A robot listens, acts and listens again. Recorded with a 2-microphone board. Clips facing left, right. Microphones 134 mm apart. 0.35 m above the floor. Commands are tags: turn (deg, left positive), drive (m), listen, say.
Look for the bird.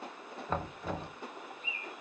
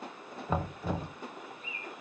<turn deg="-45"/>
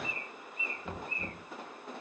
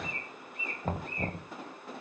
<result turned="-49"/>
<turn deg="-85"/>
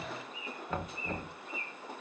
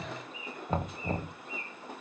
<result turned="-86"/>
<say>Found it: a bird, straight ahead.</say>